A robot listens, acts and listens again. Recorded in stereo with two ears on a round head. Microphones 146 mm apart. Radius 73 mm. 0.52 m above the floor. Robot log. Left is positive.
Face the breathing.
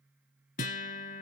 cmd idle
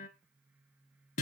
cmd idle
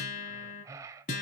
note: The breathing: about 20° right or 160° right.
cmd yaw -20
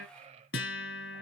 note: So it is at 140° right.
cmd yaw -140
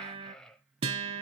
end: Found it: breathing, straight ahead, under 1 m away.